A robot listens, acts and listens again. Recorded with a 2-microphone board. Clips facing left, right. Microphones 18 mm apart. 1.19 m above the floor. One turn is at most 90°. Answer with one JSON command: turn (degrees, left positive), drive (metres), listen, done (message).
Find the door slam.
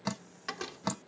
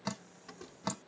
{"turn": 65}
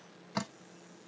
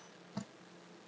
{"listen": true}
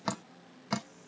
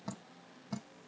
{"done": "I heard a door slam, but can't make it out now. It was about straight ahead or 50° left."}